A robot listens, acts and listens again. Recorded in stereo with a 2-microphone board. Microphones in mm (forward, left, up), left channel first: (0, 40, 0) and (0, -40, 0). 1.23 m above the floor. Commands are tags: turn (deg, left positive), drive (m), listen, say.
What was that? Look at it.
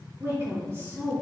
<turn deg="-30"/>
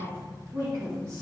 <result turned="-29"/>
<turn deg="-40"/>
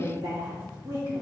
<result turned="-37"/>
<turn deg="-120"/>
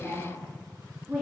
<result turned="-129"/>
<say>Facing the woman speaking, 2 to 4 m away.</say>